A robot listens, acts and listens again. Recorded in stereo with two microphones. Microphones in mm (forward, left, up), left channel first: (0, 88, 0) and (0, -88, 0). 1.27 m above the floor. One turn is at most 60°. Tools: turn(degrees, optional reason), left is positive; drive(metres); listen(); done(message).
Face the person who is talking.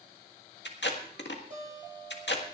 listen()
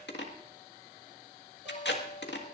listen()
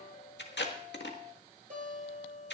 done("I can't make out anyone speaking to turn to.")